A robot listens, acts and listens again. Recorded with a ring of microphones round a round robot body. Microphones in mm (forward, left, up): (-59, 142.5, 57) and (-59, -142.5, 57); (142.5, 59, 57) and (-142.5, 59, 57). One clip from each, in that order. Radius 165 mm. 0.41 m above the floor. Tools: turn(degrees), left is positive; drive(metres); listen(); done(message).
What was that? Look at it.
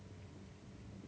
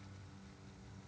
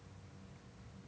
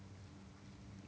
listen()
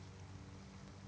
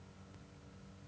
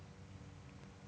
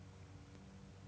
listen()
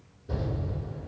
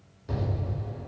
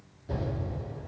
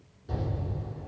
turn(degrees=-110)
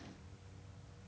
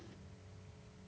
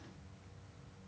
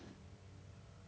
done("I heard an explosion from this way, but can't make it out now.")